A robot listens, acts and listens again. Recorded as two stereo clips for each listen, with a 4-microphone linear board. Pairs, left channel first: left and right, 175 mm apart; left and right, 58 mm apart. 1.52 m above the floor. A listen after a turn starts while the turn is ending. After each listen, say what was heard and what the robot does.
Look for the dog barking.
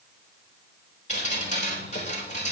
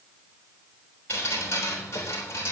Keep listening.
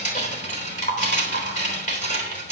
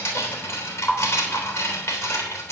Keep listening.
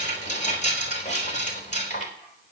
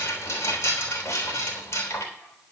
I can't make out a dog barking to turn to.